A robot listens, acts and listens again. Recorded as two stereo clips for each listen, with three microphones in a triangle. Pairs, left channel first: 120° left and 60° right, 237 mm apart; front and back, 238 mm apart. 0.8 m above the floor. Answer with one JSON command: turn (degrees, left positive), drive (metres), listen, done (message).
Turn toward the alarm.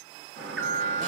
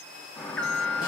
{"turn": -85}
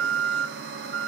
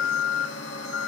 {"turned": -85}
{"turn": -20}
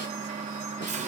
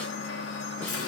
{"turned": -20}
{"done": "Facing the alarm."}